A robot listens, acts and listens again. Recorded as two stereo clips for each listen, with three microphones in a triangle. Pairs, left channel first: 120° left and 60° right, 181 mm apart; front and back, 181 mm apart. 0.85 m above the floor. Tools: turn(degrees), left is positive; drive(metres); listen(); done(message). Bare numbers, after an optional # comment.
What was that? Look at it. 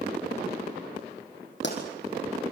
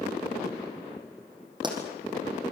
# The pop: 115° left.
turn(115)
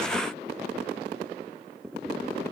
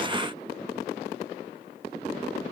done("I heard a pop from this way, but can't make it out now.")